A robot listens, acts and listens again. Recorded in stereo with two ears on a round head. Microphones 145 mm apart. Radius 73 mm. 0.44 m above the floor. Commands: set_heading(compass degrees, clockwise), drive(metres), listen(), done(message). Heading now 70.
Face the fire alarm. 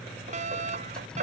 set_heading(115)
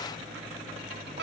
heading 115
set_heading(205)
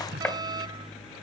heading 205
set_heading(230)
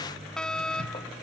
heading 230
done("Found it: a fire alarm, straight ahead.")